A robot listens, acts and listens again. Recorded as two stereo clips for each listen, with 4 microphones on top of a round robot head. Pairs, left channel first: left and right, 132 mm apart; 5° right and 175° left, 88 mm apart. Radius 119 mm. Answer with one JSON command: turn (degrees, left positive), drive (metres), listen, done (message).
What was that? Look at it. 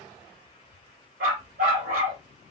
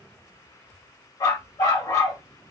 {"turn": -70}
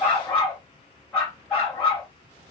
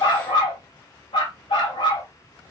{"done": "Found it: a dog barking, straight ahead."}